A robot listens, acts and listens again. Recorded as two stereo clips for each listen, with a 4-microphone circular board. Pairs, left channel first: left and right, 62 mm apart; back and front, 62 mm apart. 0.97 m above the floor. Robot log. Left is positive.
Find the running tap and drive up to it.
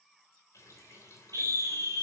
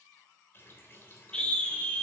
note: The running tap: 125° left.
cmd yaw +125
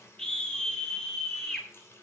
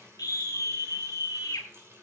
note: The running tap is now 45° left.
cmd yaw +45
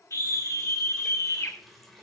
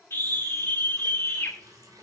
cmd fwd 1.0
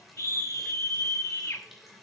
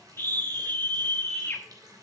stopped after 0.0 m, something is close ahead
end: Blocked. The running tap is further on, straight ahead.